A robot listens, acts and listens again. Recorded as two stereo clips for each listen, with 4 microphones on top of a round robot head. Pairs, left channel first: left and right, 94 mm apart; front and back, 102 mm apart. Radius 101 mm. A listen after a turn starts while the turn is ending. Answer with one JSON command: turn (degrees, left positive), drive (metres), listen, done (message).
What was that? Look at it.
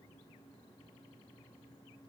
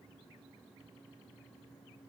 {"listen": true}
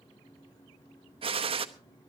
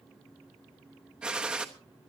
{"turn": -100}
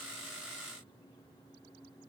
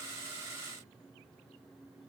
{"done": "I heard a gunshot from this way, but can't make it out now."}